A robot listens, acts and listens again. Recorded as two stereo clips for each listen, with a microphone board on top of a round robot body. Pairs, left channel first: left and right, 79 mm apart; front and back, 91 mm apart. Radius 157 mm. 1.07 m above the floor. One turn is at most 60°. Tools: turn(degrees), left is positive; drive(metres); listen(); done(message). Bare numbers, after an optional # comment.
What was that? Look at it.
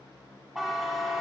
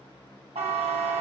# The buzzer: 175° right.
turn(-60)
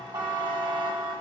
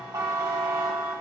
# The buzzer is now 130° right.
turn(-60)
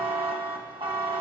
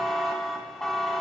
# The buzzer is now 85° right.
turn(-60)
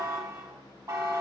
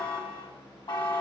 # The buzzer is now 45° right.
turn(-45)
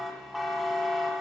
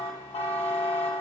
done("Facing the buzzer.")